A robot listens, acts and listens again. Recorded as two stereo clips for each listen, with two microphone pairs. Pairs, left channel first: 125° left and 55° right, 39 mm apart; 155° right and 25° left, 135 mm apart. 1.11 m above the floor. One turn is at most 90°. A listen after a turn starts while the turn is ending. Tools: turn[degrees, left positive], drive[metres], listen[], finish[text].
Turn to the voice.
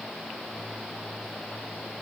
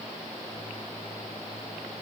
Action: listen[]
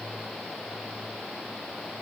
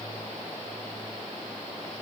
Action: listen[]
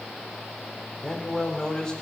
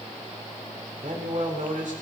Thought: The man speaking: 50° left.
Action: turn[50]
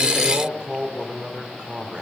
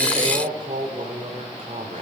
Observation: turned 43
Action: finish[Found it: a man speaking, straight ahead.]